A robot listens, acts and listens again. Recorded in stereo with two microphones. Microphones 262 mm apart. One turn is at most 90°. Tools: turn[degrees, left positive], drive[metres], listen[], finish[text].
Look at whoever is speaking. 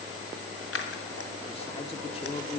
Thought: The man speaking: about 25° left or 155° left.
Action: turn[25]
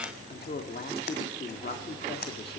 Thought: So it is at 130° left.
Action: turn[90]
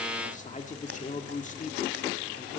Thought: The man speaking is now 40° left.
Action: turn[40]
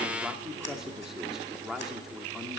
Action: finish[Facing the man speaking.]